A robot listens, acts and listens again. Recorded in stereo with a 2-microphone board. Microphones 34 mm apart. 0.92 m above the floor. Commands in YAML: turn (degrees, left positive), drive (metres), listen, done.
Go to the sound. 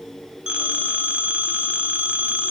turn: -35
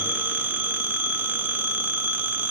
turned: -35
turn: -105
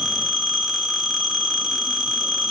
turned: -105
drive: 1.0
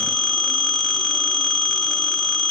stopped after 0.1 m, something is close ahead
done: "Blocked. The phone ringing is further on, straight ahead."